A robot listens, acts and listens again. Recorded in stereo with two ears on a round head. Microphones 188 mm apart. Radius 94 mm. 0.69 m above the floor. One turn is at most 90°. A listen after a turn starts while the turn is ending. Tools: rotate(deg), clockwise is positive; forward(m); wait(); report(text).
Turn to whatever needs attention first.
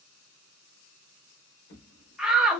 rotate(30)
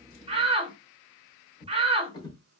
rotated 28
rotate(90)
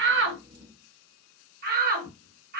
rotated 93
rotate(55)
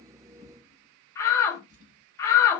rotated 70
rotate(-15)
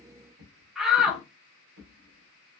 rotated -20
report("Found it: a shout, straight ahead.")